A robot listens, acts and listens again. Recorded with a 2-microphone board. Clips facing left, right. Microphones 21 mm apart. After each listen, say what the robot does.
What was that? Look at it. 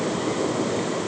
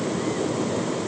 Keep listening.
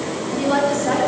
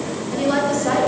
Turn 30° right.
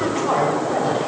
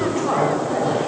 Facing the woman speaking.